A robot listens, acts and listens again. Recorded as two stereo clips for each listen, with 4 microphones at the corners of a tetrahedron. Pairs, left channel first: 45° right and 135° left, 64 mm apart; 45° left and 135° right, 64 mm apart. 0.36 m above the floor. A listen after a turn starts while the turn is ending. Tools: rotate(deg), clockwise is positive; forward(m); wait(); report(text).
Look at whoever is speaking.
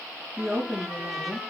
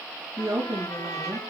rotate(140)
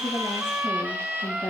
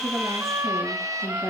rotate(-10)
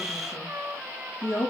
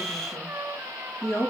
report("Facing the woman speaking, over 4 m away.")